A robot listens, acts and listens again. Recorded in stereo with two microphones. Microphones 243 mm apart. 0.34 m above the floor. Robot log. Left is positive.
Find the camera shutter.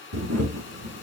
cmd yaw -90
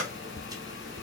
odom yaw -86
cmd idle
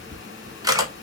note: The camera shutter is now 15° right.
cmd yaw -15
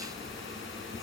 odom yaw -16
cmd idle
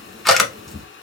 end: Found it: a camera shutter, straight ahead.